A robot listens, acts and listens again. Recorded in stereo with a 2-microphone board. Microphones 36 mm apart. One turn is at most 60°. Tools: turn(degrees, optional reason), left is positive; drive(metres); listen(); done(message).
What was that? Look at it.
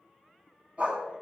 turn(degrees=-40, reason="The dog barking: about 40° right or 140° right.")
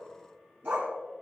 turn(degrees=-60, reason="So it is at 105° right.")
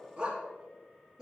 turn(degrees=-20, reason="The dog barking is now 20° right.")
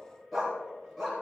done("Facing the dog barking.")